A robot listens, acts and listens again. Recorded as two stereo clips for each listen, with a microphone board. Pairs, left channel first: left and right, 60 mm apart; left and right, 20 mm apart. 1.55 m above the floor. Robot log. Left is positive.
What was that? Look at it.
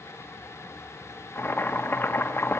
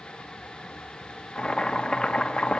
note: The boiling: about 40° left or 140° left.
cmd yaw +40
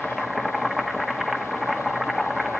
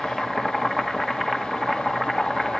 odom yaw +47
end: Found it: boiling, straight ahead, 1 to 2 m away.